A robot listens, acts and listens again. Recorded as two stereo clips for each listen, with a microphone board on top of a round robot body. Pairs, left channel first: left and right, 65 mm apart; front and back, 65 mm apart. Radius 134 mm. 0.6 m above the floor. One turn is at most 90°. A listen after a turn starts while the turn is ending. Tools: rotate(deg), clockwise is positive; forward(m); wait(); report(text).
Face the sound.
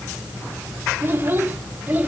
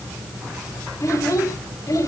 rotate(25)
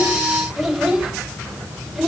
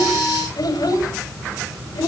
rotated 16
report("Facing the child speaking, 2 to 4 m away.")